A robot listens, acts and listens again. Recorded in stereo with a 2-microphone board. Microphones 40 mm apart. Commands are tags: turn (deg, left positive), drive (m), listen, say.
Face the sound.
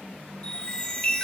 <turn deg="25"/>
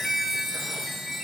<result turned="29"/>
<say>Found it: a chime, straight ahead.</say>